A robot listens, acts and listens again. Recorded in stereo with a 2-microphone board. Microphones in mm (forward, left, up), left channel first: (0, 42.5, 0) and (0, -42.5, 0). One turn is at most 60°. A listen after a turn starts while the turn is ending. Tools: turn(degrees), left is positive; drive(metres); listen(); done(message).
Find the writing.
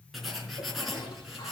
turn(degrees=30)
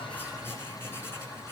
turn(degrees=60)
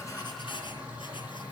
turn(degrees=60)
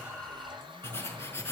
turn(degrees=30)
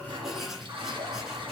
done("Facing the writing, 2 to 4 m away.")